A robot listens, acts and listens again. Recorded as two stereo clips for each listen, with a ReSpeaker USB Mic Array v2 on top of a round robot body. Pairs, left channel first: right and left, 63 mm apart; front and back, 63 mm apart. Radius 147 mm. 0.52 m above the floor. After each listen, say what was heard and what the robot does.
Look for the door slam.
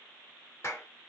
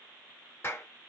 Keep listening.
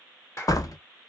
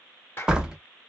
The door slam: 100° right. Turn 100° right.
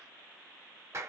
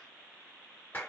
I heard a door slam from this way, but can't make it out now.